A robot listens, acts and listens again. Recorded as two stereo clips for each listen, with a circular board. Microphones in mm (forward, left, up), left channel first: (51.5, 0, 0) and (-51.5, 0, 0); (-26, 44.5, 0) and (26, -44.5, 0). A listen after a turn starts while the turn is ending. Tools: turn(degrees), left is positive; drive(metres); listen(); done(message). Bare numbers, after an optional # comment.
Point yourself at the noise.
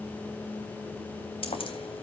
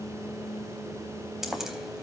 # The keys jangling: 25° left.
turn(25)
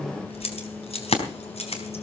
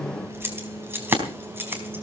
# The keys jangling is now 10° left.
turn(10)
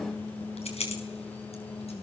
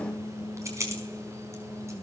done("Found it: keys jangling, straight ahead, over 4 m away.")